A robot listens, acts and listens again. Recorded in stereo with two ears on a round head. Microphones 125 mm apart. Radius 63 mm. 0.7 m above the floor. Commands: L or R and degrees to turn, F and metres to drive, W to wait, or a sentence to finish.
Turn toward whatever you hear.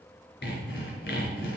L90
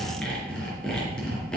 Facing the sawing.